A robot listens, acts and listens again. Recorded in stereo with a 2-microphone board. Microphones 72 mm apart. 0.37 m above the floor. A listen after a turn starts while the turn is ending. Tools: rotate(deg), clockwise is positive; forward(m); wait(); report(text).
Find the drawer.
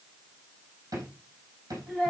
rotate(65)
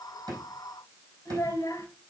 wait()
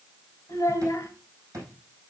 rotate(50)
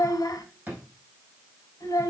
rotate(20)
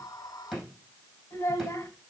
report("Facing the drawer, over 4 m away.")